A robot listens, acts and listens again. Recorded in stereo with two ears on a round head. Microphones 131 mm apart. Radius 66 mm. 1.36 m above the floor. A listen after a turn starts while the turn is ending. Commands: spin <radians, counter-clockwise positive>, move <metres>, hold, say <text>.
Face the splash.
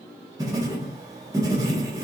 hold
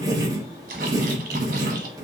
spin -1.22
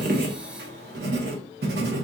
hold
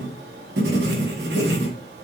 say I heard a splash, but can't make it out now. It was about straight ahead or 40° right.